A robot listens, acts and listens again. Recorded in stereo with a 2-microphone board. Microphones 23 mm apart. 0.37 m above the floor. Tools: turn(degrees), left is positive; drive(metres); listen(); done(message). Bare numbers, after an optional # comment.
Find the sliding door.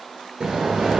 # The sliding door: about 45° right or 135° right.
turn(-45)
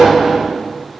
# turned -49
done("Found it: a sliding door, straight ahead, 1 to 2 m away.")